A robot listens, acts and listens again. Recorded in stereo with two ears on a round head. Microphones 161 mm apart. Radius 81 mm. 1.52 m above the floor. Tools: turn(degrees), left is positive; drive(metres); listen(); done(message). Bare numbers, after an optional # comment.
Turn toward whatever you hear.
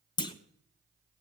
# The clunk: about 25° left or 155° left.
turn(25)
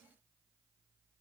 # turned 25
listen()
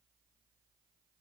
done("I heard a clunk, but can't make it out now. It was about straight ahead or 130° left.")